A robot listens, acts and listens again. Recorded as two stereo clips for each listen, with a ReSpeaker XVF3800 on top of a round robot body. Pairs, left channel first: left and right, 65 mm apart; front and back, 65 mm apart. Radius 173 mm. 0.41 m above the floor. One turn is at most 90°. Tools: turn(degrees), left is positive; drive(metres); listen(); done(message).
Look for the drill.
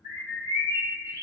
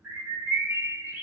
listen()
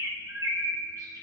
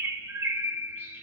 listen()
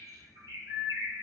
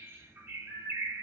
done("I can't make out a drill, only a bird.")